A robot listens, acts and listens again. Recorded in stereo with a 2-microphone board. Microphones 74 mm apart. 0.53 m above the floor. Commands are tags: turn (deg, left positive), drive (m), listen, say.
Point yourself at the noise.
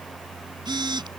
<turn deg="-70"/>
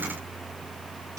<listen/>
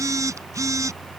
<turn deg="-45"/>
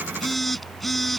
<say>Facing the phone buzzing.</say>